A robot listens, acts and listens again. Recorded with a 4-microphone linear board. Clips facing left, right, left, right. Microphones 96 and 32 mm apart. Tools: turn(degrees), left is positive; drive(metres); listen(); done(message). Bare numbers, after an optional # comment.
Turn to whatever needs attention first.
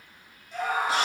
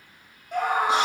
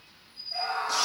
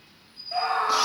# The scream: about 60° right or 120° right.
turn(-60)
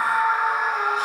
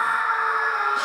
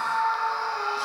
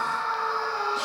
done("Facing the scream, 1 to 2 m away.")